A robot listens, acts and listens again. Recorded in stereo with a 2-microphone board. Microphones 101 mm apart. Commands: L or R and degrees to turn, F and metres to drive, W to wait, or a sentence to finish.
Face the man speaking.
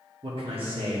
R65
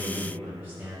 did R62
R20
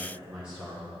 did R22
R15
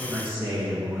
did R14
R25
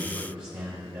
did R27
R25
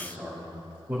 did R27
R10
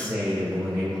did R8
Found it: a man speaking, straight ahead.